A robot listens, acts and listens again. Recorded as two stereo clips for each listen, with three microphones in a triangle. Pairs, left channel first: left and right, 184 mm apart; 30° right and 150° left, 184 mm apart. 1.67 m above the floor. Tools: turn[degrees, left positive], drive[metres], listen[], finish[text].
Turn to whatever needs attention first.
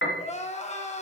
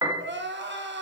Thought: The crying: 140° left.
Action: turn[140]
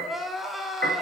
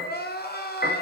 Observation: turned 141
Action: finish[Facing the crying.]